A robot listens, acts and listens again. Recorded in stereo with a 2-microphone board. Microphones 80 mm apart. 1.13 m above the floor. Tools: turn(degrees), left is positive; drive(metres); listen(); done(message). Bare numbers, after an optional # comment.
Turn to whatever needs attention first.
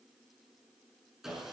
listen()
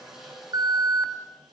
# The alarm: about 55° right or 125° right.
turn(-55)
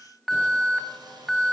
done("Facing the alarm.")